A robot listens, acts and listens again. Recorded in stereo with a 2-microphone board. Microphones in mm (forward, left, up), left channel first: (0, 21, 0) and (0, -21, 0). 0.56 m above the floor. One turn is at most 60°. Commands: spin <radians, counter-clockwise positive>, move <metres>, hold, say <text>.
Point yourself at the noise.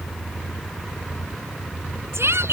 spin -1.05
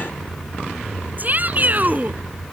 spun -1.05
spin -0.70
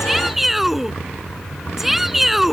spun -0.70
say Facing the shout.